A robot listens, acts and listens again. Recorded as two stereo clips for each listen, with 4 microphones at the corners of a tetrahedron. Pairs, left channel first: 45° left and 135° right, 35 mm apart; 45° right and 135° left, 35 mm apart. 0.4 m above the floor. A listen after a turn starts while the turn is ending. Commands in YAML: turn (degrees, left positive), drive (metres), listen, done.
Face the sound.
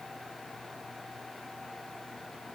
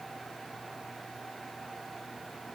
listen: true
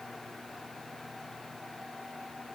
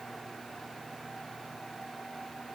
listen: true
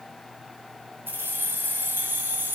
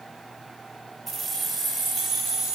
turn: -150
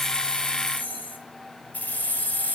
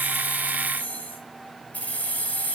done: "Found it: keys jangling, straight ahead, 1 to 2 m away."